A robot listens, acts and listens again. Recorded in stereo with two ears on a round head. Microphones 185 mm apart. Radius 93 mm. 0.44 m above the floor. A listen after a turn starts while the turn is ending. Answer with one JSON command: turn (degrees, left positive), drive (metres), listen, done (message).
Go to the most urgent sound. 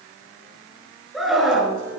{"turn": 30}
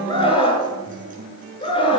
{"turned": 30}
{"turn": 155}
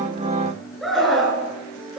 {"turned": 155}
{"drive": 1.0}
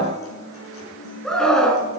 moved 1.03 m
{"drive": 1.0}
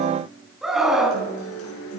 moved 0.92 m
{"drive": 1.0}
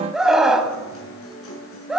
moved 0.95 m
{"drive": 1.0}
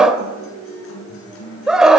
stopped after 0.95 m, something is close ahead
{"done": "I am next to the scream."}